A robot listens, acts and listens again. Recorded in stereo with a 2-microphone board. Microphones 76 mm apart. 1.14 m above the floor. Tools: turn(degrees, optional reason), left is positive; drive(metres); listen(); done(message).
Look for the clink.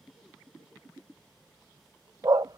listen()
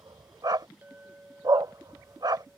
turn(degrees=-20, reason="The clink: about 20° right or 160° right.")
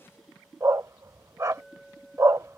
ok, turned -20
done("Found it: a clink, straight ahead.")